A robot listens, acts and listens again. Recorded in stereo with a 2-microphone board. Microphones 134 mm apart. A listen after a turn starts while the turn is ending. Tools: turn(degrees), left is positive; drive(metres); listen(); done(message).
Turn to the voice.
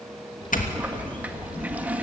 turn(degrees=40)
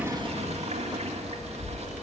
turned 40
turn(degrees=95)
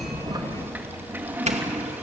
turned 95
turn(degrees=-15)
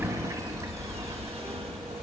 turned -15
done("Found it: a child speaking, straight ahead, 2 to 4 m away.")